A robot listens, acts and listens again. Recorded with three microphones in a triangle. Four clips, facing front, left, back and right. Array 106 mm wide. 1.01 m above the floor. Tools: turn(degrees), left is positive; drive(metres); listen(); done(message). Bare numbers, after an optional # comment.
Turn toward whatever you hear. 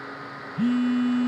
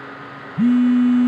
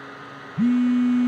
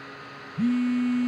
# The phone buzzing: 115° left.
turn(115)
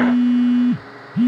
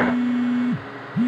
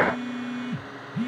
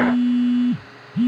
# The phone buzzing is now 15° right.
turn(-15)
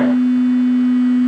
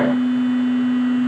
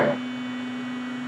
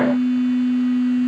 done("Facing the phone buzzing, under 1 m away.")